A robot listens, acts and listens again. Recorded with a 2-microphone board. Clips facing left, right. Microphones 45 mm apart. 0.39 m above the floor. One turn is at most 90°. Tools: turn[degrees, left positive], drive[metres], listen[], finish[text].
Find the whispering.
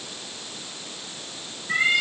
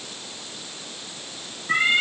Action: listen[]
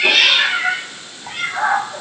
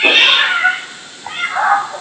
Action: listen[]
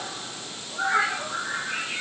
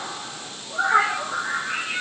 Action: finish[I can't make out whispering to turn to.]